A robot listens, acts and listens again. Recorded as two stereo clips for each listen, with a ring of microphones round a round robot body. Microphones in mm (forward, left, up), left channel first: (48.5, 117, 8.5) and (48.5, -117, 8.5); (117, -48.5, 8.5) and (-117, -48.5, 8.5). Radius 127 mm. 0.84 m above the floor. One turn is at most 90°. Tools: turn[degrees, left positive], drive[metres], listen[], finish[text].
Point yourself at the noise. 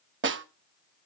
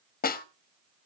Thought: The snare drum: 50° right.
Action: turn[-50]
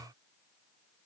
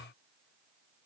Action: listen[]
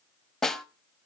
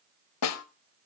Action: finish[Found it: a snare drum, straight ahead.]